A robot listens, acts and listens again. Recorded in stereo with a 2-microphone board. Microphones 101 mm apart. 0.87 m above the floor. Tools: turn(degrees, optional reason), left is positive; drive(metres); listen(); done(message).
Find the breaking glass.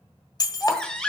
turn(degrees=40, reason="The breaking glass: about 40° left or 140° left.")
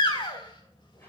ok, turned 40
listen()
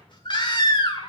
done("I heard breaking glass, but can't make it out now. It was about straight ahead or 100° left.")